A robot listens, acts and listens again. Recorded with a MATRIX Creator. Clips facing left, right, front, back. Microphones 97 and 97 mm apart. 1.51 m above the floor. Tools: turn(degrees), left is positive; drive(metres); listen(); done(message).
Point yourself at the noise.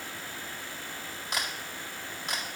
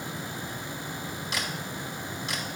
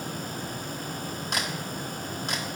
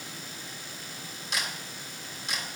turn(degrees=40)
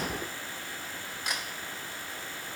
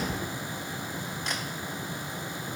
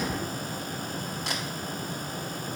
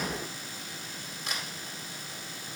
turn(degrees=10)
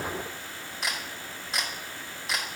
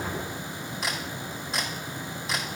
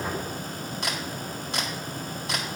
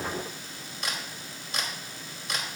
done("Facing the camera shutter, 2 to 4 m away.")